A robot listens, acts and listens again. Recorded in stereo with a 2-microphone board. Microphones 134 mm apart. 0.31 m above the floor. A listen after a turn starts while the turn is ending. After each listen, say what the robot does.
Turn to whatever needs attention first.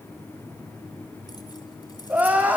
Turn 30° right.
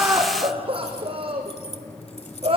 Turn 135° right.
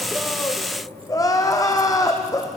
Turn 25° left.
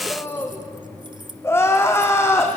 Turn 20° left.
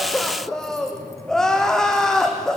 Found it: crying, straight ahead.